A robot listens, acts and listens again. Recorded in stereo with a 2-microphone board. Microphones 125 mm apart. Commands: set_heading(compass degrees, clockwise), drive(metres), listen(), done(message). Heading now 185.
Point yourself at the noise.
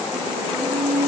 set_heading(275)
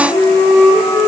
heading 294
set_heading(264)
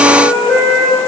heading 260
done("Found it: a flute, straight ahead.")